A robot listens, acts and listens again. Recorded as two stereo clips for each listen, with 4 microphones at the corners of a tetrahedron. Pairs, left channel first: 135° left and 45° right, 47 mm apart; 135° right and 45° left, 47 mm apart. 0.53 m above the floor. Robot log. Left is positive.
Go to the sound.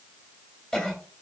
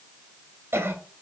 note: The cough: 65° left.
cmd yaw +65
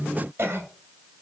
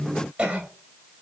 note: The cough is now 10° right.
cmd yaw -10
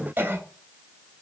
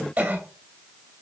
cmd fwd 1.0
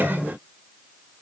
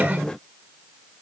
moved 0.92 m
cmd fwd 1.0
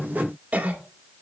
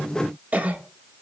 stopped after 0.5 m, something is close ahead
end: Arrived at the cough, straight ahead.